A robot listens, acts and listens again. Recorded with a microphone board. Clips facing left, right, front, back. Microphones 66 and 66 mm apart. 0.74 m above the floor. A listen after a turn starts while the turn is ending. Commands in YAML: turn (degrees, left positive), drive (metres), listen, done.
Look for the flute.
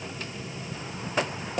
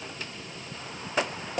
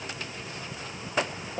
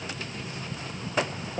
listen: true
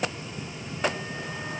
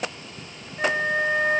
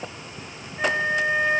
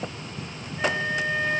turn: -65
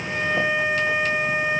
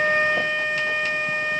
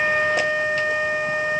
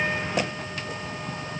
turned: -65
turn: 10
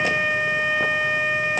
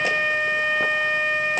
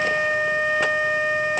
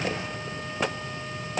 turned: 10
done: "Found it: a flute, straight ahead."